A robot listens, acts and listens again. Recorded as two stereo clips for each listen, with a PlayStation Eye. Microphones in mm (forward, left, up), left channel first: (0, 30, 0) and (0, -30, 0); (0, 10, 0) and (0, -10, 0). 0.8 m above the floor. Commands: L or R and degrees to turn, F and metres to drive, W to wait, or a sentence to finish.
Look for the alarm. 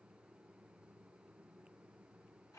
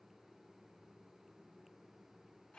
W
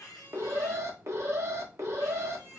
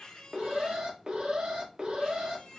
R55
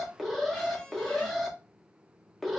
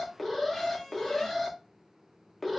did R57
Facing the alarm.